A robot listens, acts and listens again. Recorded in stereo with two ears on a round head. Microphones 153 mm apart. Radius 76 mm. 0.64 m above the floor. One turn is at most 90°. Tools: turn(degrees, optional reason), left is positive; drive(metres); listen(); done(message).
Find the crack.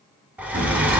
turn(degrees=-90)
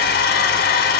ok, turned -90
done("I heard a crack from this way, but can't make it out now.")